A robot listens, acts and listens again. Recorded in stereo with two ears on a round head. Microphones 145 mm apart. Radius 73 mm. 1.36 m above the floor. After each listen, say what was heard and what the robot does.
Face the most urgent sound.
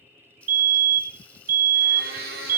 The fire alarm: about 55° right or 125° right. Turn 55° right.
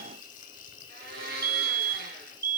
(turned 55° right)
So it is at 25° right. Turn 25° right.
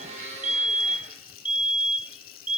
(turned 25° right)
The fire alarm is now 10° right. Turn 10° right.
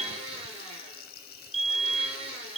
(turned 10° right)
Facing the fire alarm, 1 to 2 m away.